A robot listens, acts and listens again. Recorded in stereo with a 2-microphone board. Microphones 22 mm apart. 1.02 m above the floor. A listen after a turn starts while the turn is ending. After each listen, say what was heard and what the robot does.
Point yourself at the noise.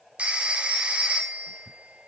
The phone ringing: about 60° right or 120° right. Turn 60° right.
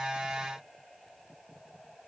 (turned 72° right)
Keep listening.
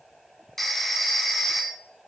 So it is at 10° left. Turn 10° left.
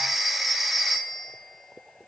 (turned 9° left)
Facing the phone ringing.